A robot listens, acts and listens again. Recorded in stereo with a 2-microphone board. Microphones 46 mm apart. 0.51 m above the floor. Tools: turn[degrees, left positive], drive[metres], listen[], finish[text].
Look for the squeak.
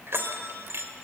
Action: listen[]
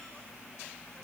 Action: listen[]
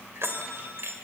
Action: finish[I can't make out a squeak, only a bell.]